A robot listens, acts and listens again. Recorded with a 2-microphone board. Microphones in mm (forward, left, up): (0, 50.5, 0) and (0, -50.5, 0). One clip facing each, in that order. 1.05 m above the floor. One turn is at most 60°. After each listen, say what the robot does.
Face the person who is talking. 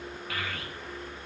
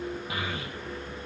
Turn 20° right.
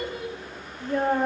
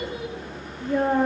Facing the child speaking, under 1 m away.